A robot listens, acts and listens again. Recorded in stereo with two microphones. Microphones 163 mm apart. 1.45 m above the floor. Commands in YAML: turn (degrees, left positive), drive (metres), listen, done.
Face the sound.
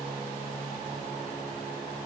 listen: true
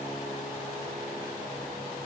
listen: true
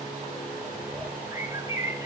turn: -20
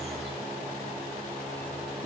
listen: true
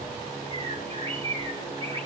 turn: -140
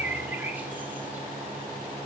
turn: -10
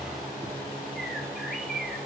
done: "Found it: a bird, straight ahead, 2 to 4 m away."